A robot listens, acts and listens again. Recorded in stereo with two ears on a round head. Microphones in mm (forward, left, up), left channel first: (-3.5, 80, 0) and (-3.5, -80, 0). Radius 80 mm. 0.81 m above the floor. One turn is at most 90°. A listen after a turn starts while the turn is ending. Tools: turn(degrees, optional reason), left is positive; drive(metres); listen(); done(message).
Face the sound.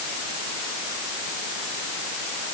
listen()
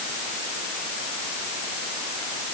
listen()
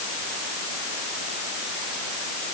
done("I can't make out anything.")